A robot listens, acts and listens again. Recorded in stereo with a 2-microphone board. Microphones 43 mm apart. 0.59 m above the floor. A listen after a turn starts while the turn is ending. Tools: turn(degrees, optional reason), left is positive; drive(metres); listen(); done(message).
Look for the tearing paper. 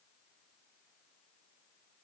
listen()
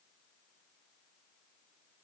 listen()
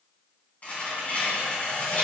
turn(degrees=35, reason="The tearing paper: about 35° left or 145° left.")
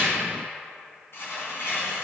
turn(degrees=115, reason="So it is at 115° left.")
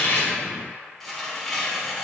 done("Facing the tearing paper.")